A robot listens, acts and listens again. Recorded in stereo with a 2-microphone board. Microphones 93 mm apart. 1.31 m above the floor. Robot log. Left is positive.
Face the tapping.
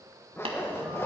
note: The tapping: about 75° right or 105° right.
cmd yaw -75
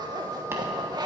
cmd idle
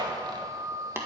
note: So it is at 30° right.
cmd yaw -30
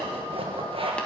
cmd idle
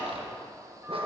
cmd idle
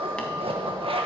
end: Facing where the tapping came from. I can't hear it now.